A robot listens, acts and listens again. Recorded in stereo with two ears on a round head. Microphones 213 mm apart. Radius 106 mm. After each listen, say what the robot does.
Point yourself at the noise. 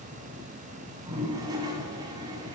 Turn 15° right.
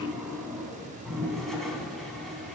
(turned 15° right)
Facing the toilet flushing, 2 to 4 m away.